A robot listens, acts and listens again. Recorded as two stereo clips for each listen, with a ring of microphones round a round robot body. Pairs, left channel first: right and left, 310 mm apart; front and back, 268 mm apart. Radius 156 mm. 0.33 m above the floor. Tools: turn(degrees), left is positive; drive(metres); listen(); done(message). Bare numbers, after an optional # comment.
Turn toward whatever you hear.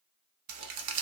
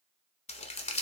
# The crumpling: 70° left.
turn(70)
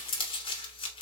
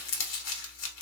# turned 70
# The crumpling is now 15° right.
turn(-15)
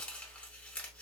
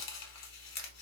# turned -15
done("Found it: crumpling, straight ahead, under 1 m away.")